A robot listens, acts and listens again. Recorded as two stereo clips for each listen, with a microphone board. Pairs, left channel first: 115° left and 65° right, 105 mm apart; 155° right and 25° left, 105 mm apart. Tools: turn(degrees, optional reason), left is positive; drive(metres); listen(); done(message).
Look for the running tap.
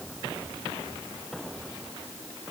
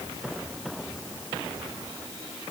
listen()
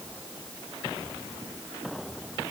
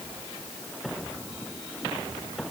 listen()
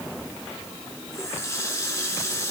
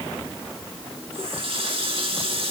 turn(degrees=50, reason="The running tap: 50° left.")
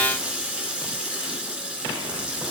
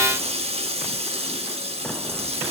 turn(degrees=10, reason="The running tap is now 10° left.")
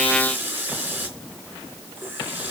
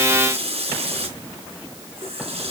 done("Facing the running tap.")